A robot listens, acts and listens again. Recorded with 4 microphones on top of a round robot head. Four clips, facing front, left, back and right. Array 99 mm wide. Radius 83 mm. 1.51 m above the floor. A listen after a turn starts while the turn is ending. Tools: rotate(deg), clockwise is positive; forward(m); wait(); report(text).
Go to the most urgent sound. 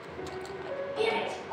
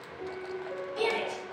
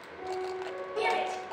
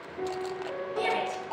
rotate(145)
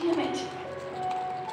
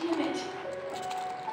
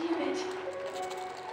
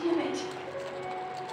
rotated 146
wait()
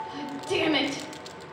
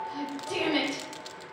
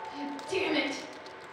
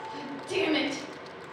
forward(1.0)
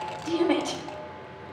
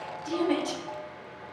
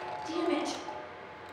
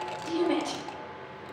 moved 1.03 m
forward(1.0)
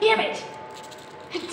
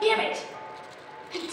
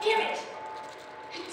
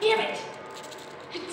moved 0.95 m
rotate(-10)
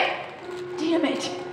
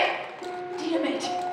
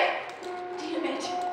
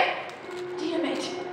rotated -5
forward(1.0)
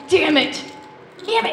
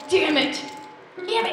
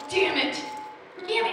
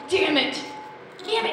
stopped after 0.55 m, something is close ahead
report("Arrived at the shout, straight ahead.")